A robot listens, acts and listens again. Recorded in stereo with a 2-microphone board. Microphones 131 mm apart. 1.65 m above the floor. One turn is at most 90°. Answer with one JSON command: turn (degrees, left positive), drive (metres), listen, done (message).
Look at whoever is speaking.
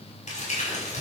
{"listen": true}
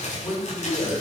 {"turn": 30}
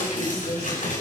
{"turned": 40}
{"turn": 90}
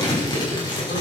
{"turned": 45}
{"turn": 85}
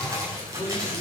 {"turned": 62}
{"turn": 25}
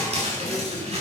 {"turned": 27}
{"done": "I heard a man speaking from this way, but can't make it out now."}